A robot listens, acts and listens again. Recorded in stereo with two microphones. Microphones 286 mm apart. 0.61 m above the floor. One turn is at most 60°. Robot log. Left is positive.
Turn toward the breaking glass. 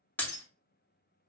cmd yaw +30
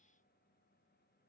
cmd idle
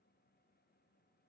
end: I heard breaking glass, but can't make it out now. It was about 25° right or 145° left.